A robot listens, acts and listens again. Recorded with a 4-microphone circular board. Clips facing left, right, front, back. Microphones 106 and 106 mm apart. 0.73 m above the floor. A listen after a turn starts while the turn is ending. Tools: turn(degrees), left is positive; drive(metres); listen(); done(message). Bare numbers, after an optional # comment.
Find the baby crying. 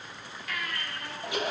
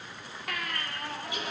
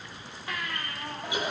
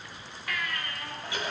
# The baby crying: 65° right.
turn(-65)
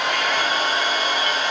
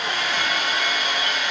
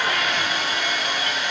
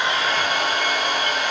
listen()
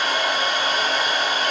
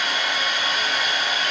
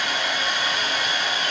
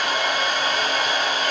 listen()
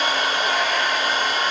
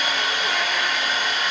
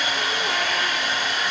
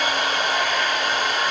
done("Facing where the baby crying came from. I can't hear it now.")